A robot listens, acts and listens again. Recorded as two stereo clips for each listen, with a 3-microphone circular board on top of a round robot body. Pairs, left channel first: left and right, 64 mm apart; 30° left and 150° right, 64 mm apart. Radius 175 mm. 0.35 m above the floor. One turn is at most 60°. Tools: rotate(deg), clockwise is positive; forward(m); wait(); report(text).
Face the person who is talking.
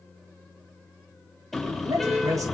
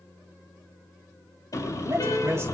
rotate(60)
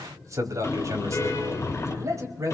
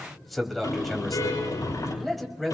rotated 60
rotate(60)
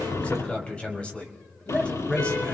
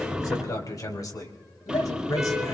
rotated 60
rotate(-20)
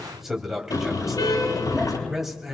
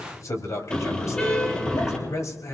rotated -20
report("Facing the man speaking, 2 to 4 m away.")